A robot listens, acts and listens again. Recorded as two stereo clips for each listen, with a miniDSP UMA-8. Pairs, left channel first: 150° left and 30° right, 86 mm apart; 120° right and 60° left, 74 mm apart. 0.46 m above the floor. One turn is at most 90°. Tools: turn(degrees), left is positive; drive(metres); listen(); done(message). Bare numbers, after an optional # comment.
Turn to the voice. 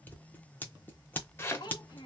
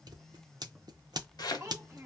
# The child speaking: 110° left.
turn(90)
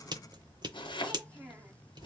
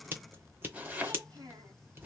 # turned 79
# The child speaking is now 30° left.
turn(30)
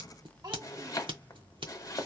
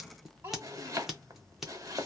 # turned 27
done("Found it: a child speaking, straight ahead.")